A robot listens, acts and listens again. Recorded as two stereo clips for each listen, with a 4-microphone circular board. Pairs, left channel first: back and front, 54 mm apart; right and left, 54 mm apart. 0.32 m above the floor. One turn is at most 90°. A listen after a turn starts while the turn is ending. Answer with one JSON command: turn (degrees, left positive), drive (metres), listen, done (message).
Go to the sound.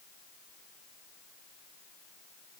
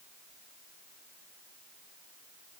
{"listen": true}
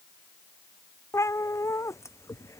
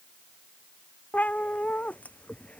{"turn": -90}
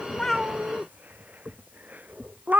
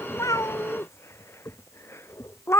{"turn": -55}
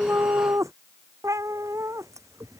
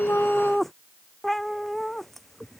{"drive": 1.0}
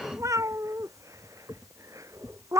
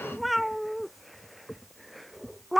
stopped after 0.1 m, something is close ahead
{"done": "Something is in my way. I am facing the cat meowing but have not reached it."}